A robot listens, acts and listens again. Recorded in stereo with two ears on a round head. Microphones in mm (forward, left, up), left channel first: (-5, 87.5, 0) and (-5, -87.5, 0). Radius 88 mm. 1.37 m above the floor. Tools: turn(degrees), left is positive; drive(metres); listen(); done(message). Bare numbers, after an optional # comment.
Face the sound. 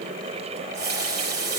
# The running tap: about 60° right or 120° right.
turn(-60)
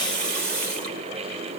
# So it is at 60° right.
turn(-60)
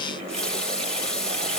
done("Facing the running tap, over 4 m away.")